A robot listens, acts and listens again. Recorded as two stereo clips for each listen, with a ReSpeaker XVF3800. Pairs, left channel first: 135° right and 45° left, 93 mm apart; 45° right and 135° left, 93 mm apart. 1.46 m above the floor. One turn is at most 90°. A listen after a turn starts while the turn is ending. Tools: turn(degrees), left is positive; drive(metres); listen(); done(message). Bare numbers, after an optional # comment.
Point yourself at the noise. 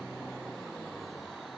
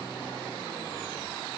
listen()
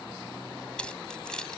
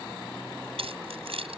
# The keys jangling: 145° left.
turn(90)
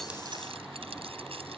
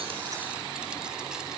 # Nothing new. It was at 55° left.
turn(55)
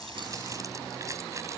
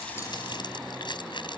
# The keys jangling is now 10° right.
turn(-10)
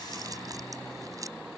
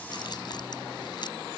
listen()
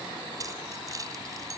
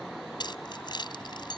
done("Facing the keys jangling.")